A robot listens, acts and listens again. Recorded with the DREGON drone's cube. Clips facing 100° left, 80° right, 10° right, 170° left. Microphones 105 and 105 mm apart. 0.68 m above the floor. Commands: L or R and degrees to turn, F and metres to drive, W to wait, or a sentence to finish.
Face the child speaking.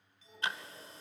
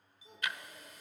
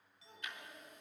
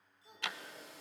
R115
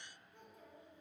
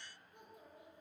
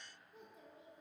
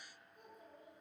Found it: a child speaking, straight ahead.